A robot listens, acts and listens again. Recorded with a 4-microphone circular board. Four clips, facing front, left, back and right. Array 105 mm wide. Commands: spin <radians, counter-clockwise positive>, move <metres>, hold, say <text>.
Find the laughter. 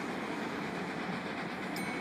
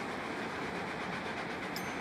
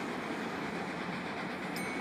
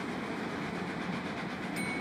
hold
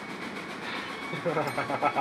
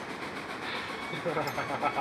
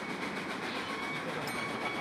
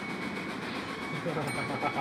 spin 0.26
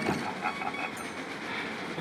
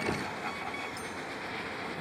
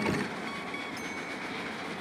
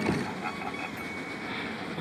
hold
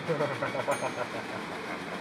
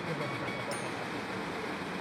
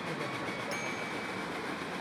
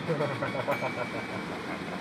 spin -0.70
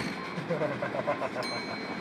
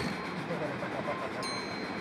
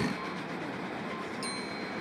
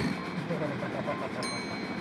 say Facing the laughter.